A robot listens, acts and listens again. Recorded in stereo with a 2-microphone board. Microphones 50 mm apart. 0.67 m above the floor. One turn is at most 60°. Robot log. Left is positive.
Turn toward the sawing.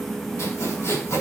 cmd yaw +60
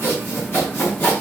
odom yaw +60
note: So it is at 35° left.
cmd yaw +35
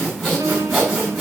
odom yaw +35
end: Found it: sawing, straight ahead.